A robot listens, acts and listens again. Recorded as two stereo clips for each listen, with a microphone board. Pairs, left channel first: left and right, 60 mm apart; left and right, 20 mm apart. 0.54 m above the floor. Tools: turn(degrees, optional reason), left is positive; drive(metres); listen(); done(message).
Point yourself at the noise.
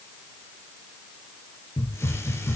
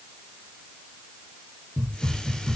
turn(degrees=50, reason="The hiss: about 50° left or 130° left.")
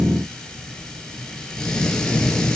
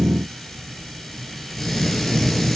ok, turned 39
turn(degrees=15, reason="So it is at 15° left.")
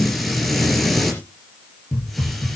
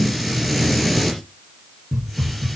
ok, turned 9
done("Found it: a hiss, straight ahead.")